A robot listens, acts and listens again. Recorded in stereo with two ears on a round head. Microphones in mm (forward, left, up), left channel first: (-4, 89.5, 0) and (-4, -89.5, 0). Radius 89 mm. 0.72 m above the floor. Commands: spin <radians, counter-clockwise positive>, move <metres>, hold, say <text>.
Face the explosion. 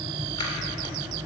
hold
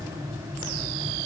hold
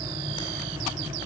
say I can't make out an explosion to turn to.